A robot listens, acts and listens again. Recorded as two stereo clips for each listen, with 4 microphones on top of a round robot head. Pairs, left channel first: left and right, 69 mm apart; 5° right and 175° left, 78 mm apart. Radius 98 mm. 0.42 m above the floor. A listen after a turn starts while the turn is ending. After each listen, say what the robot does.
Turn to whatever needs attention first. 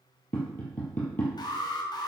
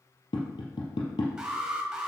Turn 95° left.
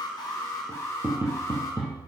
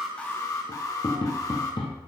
Turn 40° left.
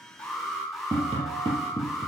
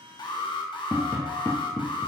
Found it: an alarm, straight ahead, 1 to 2 m away.